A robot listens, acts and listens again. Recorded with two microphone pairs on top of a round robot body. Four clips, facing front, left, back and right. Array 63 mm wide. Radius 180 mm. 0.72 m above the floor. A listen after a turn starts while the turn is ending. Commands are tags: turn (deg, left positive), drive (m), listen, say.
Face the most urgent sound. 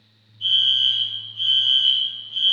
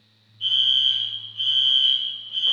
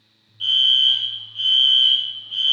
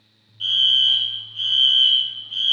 <turn deg="-135"/>
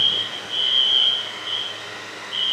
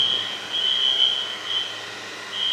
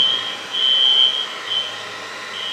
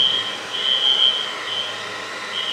<say>Found it: a fire alarm, straight ahead, 2 to 4 m away.</say>